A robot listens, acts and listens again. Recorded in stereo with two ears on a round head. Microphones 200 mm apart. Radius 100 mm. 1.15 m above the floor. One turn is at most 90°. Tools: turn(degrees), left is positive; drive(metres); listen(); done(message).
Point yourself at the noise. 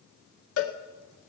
turn(degrees=75)
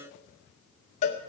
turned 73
turn(degrees=30)
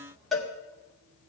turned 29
done("Found it: a cowbell, straight ahead, 1 to 2 m away.")